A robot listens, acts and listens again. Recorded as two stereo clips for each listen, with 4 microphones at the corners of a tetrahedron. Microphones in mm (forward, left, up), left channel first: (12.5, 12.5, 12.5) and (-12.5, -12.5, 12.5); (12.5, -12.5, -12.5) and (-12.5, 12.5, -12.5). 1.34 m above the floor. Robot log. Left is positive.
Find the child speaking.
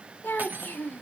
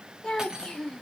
note: The child speaking: 20° left.
cmd yaw +20
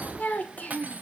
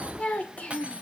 end: Facing the child speaking, 1 to 2 m away.